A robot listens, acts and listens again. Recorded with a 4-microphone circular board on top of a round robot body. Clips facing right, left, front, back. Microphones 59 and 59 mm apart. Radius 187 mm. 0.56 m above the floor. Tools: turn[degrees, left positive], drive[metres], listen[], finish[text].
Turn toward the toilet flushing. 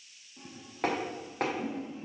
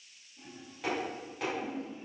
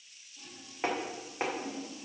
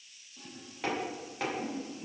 Thought: The toilet flushing: 110° right.
Action: turn[-110]
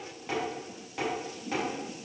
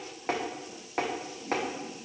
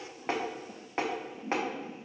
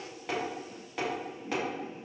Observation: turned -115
Action: finish[Found it: a toilet flushing, straight ahead, 1 to 2 m away.]